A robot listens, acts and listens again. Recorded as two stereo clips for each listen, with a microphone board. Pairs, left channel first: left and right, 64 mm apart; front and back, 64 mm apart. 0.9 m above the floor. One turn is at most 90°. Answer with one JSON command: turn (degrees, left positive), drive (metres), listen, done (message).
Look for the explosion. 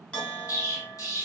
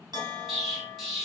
{"turn": 90}
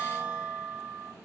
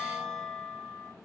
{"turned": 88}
{"done": "I heard an explosion from this way, but can't make it out now."}